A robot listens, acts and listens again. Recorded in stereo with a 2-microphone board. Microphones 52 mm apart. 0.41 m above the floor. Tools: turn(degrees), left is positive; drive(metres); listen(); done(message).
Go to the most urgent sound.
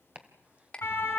turn(degrees=45)
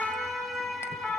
drive(metres=1.0)
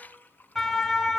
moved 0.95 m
drive(metres=1.0)
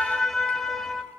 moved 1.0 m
drive(metres=1.0)
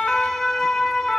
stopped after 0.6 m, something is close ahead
turn(degrees=10)
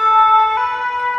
done("I am next to the siren.")